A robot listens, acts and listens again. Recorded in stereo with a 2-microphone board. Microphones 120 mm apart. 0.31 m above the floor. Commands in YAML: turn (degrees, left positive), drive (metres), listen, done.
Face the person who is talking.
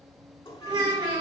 turn: -35
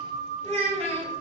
turn: -105
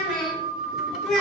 done: "Found it: a child speaking, straight ahead, 2 to 4 m away."